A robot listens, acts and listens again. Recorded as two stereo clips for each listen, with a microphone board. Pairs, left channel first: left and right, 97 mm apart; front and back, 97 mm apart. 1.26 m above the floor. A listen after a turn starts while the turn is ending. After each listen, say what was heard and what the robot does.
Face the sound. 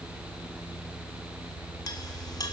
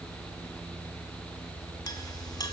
The clink: 45° left. Turn 45° left.
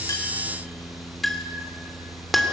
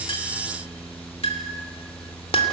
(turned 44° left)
Facing the clink, 2 to 4 m away.